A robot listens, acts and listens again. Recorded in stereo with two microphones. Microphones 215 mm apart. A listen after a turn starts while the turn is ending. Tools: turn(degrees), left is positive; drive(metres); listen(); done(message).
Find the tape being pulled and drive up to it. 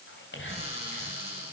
listen()
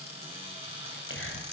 listen()
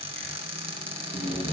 turn(degrees=30)
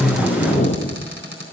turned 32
turn(degrees=145)
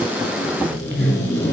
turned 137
turn(degrees=10)
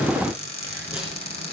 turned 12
listen()
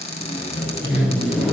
drive(metres=1.0)
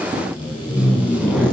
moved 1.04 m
drive(metres=1.0)
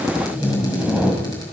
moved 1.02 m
drive(metres=1.0)
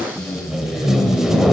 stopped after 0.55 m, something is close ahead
done("I am next to the tape being pulled.")